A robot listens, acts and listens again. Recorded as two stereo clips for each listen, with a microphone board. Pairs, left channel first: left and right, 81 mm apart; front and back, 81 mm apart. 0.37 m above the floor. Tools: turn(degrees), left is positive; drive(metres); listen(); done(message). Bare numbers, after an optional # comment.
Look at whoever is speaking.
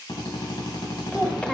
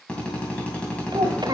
# The child speaking: 170° left.
turn(170)
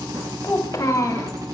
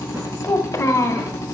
# The child speaking is now 45° left.
turn(45)
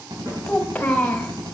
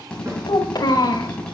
# The child speaking is now 20° left.
turn(20)
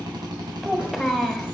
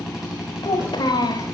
done("Facing the child speaking.")